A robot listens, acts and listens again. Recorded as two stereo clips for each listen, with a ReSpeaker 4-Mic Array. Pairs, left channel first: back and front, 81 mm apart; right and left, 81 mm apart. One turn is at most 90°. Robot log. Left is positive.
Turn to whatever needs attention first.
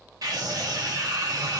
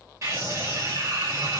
note: The scream: 40° left.
cmd yaw +40
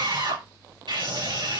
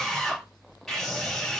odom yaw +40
end: Found it: a scream, straight ahead.